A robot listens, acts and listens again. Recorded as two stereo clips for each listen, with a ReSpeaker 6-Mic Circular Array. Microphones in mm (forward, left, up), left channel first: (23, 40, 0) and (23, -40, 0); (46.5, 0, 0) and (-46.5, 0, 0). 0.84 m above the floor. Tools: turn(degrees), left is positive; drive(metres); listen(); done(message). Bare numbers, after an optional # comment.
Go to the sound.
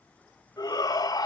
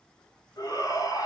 # The shout: 50° left.
turn(50)
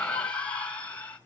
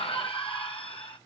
# The shout is now 15° left.
turn(15)
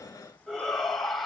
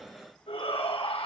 drive(1.0)
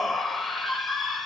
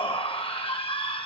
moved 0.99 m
drive(1.0)
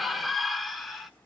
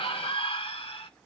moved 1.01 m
drive(1.0)
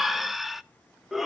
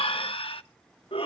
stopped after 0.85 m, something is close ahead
done("I am next to the shout.")